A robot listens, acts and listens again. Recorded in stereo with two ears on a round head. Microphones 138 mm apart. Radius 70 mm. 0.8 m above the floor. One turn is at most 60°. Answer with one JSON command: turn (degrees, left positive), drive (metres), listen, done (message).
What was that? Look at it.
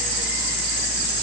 {"listen": true}
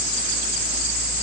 {"listen": true}
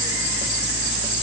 {"done": "I can't make out anything."}